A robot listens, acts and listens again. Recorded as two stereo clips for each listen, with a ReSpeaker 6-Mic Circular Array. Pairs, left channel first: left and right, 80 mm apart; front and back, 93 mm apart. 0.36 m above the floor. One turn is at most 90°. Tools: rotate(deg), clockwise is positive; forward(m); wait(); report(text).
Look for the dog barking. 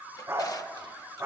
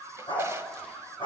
rotate(30)
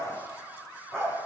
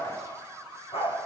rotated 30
report("Found it: a dog barking, straight ahead, over 4 m away.")